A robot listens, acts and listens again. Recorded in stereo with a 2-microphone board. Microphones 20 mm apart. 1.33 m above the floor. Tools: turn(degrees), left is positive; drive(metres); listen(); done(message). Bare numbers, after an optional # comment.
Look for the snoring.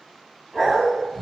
# The snoring: about 15° left or 165° left.
turn(15)
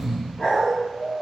done("Facing the snoring.")